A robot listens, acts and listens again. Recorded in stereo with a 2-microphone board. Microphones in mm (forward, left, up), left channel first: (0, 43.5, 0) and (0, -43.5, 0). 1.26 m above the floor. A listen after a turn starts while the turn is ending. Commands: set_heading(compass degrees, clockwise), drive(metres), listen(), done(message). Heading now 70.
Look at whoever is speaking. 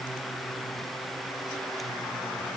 listen()
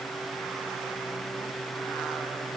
listen()
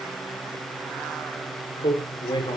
set_heading(5)
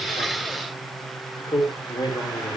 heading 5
set_heading(320)
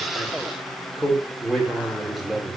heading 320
done("Facing the man speaking.")